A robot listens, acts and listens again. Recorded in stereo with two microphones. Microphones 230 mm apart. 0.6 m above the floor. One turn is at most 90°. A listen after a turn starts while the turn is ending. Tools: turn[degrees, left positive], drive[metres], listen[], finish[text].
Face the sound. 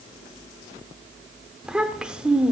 Action: turn[-30]
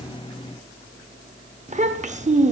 Thought: So it is at 145° right.
Action: turn[-90]
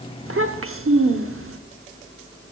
Thought: The child speaking is now 85° right.
Action: turn[-85]
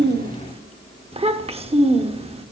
Thought: The child speaking is now 25° right.
Action: turn[-25]
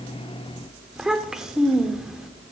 Action: finish[Facing the child speaking.]